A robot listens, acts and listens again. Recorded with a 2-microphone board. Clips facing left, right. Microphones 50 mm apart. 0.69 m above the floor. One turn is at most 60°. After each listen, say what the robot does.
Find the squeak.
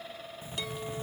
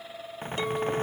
Turn 55° right.
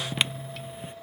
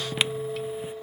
Facing the squeak.